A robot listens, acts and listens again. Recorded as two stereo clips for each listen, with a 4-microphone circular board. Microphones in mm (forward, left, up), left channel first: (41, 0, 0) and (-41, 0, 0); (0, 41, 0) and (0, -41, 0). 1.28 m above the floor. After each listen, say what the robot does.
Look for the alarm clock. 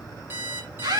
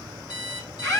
Turn 115° left.
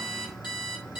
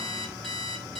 Found it: an alarm clock, straight ahead.